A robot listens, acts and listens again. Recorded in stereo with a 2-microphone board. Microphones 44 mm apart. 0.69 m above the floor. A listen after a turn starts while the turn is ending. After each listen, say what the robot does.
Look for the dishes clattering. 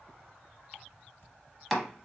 Turn 50° left.
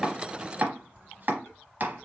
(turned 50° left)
Turn 75° left.
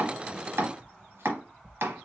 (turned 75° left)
Turn 20° left.
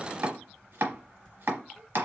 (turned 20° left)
Keep listening.
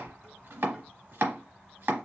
Found it: dishes clattering, straight ahead.